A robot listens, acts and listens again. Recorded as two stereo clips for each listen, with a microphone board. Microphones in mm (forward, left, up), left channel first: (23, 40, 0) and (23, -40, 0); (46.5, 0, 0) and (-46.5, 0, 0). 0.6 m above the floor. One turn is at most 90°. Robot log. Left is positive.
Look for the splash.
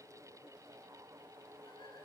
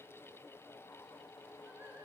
cmd idle
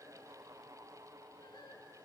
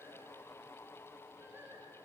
cmd idle
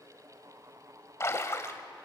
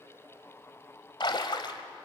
note: The splash: 35° left.
cmd yaw +35
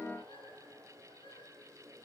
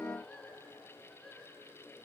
end: I heard a splash from this way, but can't make it out now.